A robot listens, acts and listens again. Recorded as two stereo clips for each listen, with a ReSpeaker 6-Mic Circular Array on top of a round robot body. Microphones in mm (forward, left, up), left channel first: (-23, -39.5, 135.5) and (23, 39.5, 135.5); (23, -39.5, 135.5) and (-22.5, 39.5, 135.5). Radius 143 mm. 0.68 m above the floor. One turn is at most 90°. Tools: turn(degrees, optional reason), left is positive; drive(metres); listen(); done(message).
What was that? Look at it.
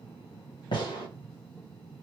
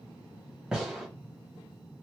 turn(degrees=-90, reason="The gunshot: 155° right.")
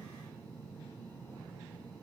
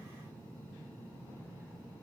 turn(degrees=-65, reason="Nothing new. It was at 65° right.")
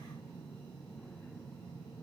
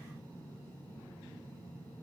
done("I heard a gunshot from this way, but can't make it out now.")